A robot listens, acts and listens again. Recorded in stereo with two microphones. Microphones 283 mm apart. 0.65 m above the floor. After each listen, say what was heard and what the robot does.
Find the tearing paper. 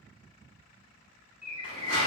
The tearing paper: about 50° left or 130° left. Turn 50° left.
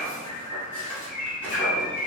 Facing the tearing paper, 1 to 2 m away.